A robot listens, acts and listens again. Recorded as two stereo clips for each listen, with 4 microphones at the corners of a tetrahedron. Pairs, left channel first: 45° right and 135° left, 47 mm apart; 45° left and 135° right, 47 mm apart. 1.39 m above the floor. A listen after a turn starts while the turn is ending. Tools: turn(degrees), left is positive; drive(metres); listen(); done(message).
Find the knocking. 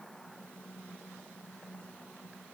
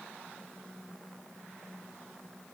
listen()
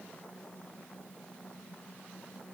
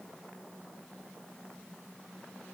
listen()
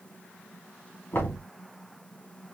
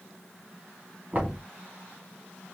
turn(degrees=-80)
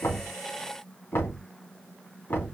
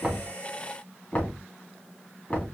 turn(degrees=-10)
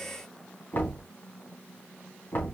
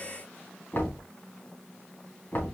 done("Found it: knocking, straight ahead.")